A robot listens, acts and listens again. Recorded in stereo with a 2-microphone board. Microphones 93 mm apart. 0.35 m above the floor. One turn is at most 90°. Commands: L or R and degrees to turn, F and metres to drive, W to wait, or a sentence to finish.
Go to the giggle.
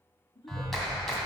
L60
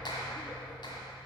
W
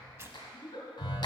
L55
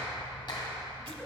W
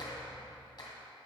W
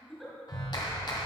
F1.0
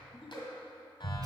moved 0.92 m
F1.0
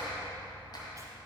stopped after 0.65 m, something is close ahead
W
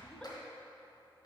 W
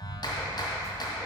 Facing where the giggle came from. I can't hear it now. I did not reach it.